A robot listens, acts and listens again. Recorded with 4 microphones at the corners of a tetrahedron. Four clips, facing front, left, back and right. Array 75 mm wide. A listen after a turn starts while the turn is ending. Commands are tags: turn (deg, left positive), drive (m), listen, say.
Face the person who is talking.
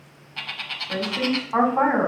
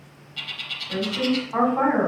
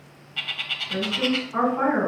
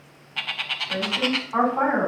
<say>Found it: a woman speaking, straight ahead, 2 to 4 m away.</say>